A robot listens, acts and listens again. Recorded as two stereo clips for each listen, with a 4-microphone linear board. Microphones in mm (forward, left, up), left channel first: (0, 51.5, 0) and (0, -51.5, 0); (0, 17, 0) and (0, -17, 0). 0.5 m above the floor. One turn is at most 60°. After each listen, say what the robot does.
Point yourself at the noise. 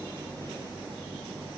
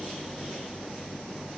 Keep listening.
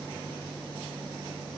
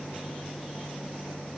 Keep listening.
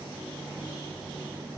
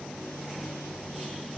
I can't make out anything.